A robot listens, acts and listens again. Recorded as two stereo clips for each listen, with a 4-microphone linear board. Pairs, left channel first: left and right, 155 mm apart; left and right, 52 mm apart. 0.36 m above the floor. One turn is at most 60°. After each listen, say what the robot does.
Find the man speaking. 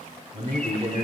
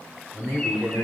Turn 35° right.
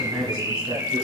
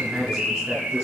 Facing the man speaking.